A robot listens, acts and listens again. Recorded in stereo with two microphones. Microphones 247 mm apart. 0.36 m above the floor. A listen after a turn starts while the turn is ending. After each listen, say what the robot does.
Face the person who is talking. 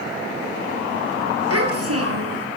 Turn 70° right.
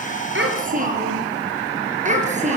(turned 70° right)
Turn 30° right.
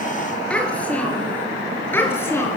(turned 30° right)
Turn 10° left.
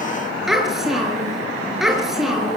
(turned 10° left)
Found it: a child speaking, straight ahead.